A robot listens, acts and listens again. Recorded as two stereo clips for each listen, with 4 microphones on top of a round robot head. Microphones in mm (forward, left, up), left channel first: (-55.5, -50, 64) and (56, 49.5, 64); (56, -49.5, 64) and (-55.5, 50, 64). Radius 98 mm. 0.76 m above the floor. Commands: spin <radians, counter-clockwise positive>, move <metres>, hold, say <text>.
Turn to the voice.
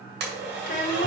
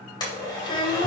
spin -1.75
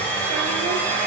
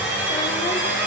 hold
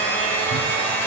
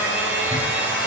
hold
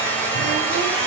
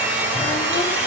say I heard a child speaking from this way, but can't make it out now.